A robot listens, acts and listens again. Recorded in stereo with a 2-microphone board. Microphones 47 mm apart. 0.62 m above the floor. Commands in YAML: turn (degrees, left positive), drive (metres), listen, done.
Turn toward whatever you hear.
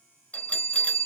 turn: 35
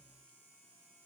listen: true
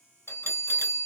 turn: 110
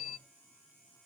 turn: -20
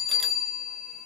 done: "Facing the bell."